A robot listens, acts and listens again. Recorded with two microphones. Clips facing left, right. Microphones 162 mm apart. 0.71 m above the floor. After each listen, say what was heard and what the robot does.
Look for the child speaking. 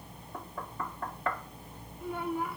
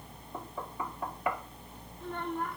Turn 30° left.
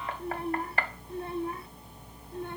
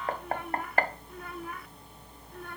So it is at 155° left. Turn 155° left.
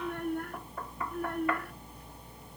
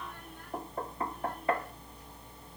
The child speaking is now 65° left. Turn 65° left.
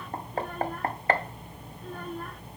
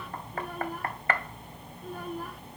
Keep listening.
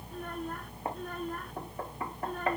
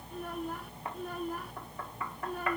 Facing the child speaking.